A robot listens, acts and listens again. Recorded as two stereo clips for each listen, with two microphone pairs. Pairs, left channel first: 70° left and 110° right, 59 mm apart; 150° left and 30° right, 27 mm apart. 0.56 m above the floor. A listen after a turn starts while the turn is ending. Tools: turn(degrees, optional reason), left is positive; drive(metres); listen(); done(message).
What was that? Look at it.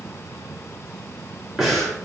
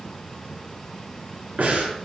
turn(degrees=-25, reason="The breathing: 25° right.")
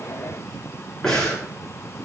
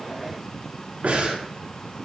turn(degrees=-10, reason="The breathing is now 10° right.")
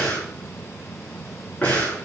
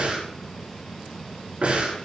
done("Found it: breathing, straight ahead, over 4 m away.")